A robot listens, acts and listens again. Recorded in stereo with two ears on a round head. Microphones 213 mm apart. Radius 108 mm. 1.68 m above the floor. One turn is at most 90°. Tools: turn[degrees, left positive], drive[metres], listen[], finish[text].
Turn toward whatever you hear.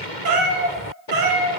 Thought: The cat meowing: about 50° right or 130° right.
Action: turn[-50]
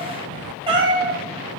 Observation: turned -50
Thought: So it is at 15° right.
Action: turn[-15]
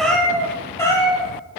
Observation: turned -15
Thought: The cat meowing is now 15° left.
Action: turn[15]
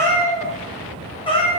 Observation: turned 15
Thought: The cat meowing is now 25° left.
Action: turn[25]
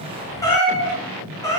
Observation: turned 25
Thought: The cat meowing is now 15° left.
Action: turn[15]
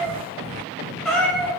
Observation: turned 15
Action: finish[Facing the cat meowing.]